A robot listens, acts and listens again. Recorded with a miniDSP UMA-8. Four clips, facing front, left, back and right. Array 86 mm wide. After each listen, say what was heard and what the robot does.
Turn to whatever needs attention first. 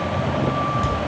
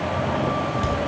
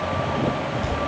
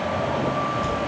Keep listening.
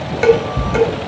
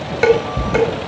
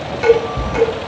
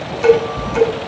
Keep listening.
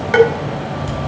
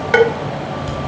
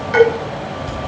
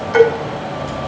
I can't make out anything urgent, only dishes clattering.